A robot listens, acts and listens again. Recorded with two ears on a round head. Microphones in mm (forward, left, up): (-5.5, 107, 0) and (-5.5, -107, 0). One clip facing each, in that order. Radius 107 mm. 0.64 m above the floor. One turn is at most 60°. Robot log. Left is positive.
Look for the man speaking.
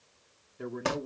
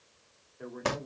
note: The man speaking: about 55° left or 125° left.
cmd yaw +55
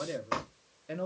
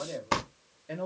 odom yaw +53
end: Facing the man speaking.